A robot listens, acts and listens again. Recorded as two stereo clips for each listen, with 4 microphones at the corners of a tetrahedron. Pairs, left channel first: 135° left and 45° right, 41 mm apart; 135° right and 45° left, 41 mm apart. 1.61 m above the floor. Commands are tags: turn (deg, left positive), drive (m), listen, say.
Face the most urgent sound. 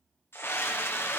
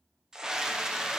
<turn deg="120"/>
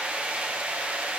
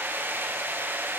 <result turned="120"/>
<turn deg="10"/>
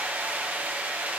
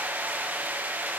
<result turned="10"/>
<say>Facing the scream, under 1 m away.</say>